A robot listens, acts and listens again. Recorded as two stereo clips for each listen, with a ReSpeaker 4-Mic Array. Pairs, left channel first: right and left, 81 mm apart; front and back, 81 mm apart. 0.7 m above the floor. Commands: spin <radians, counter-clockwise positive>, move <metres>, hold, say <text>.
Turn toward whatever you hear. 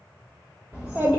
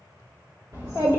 spin 2.79
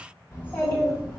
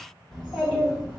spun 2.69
spin 0.35
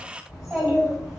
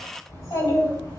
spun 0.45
say Found it: a child speaking, straight ahead.